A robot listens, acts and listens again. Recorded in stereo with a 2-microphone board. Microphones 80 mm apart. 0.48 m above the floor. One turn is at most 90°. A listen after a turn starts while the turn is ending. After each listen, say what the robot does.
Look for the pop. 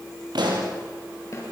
Turn 90° right.
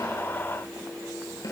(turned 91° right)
I heard a pop from this way, but can't make it out now.